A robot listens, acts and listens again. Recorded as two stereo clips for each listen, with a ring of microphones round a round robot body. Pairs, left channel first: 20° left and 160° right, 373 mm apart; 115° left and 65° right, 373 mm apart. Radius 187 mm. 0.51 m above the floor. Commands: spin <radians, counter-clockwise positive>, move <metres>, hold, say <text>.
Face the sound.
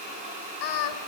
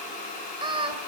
spin 0.17
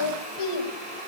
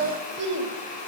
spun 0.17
spin -0.17
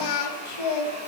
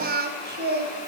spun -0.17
say Facing the singing, 2 to 4 m away.